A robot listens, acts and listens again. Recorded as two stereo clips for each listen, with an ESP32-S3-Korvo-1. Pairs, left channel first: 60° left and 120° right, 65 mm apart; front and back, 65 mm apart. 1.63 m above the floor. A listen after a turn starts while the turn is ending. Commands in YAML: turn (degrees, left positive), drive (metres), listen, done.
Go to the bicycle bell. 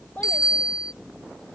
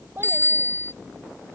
turn: 55
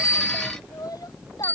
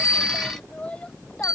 drive: 1.0
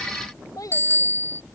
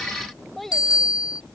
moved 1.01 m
turn: 10
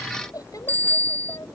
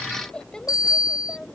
drive: 1.0
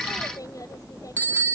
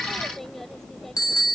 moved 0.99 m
drive: 1.0
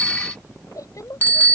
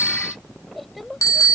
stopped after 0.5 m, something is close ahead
done: "I am next to the bicycle bell."